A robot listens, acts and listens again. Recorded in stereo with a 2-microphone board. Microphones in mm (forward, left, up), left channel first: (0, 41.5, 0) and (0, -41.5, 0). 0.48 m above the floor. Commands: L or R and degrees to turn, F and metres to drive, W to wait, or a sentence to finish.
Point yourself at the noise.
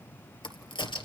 L90
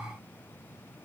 I heard a crack from this way, but can't make it out now.